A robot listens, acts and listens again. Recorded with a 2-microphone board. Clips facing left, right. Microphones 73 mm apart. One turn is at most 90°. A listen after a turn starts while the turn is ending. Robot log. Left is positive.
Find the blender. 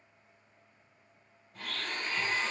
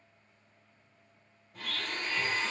cmd yaw +30
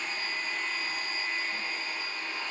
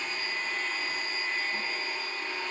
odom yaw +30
note: So it is at 30° right.
cmd yaw -30
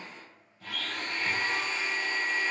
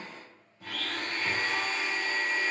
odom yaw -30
note: The blender is now 20° right.
cmd yaw -20
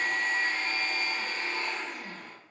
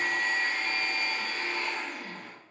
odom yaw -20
end: Found it: a blender, straight ahead.